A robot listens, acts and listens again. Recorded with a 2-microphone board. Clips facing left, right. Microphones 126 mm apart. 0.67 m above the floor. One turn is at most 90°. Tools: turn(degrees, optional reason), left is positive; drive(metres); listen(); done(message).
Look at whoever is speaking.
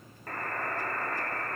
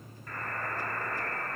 listen()
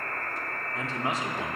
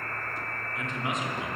turn(degrees=35, reason="The man speaking: about 35° left or 145° left.")
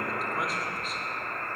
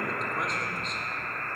listen()
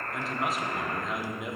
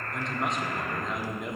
done("Found it: a man speaking, straight ahead, 1 to 2 m away.")